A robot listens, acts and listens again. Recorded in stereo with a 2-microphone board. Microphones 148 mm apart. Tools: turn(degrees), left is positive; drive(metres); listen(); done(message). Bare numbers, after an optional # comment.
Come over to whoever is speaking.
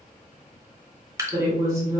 # The woman speaking: about 20° right or 160° right.
turn(-20)
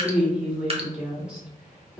drive(1.0)
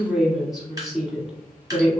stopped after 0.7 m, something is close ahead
done("Arrived at the woman speaking, straight ahead.")